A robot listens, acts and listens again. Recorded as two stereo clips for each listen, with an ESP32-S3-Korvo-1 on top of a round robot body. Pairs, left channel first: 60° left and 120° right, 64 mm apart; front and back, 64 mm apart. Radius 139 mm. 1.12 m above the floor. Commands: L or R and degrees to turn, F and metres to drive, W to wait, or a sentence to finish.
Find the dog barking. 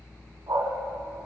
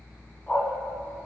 R70
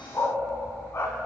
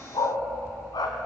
L10
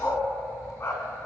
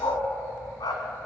L10
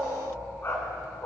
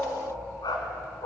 Found it: a dog barking, straight ahead.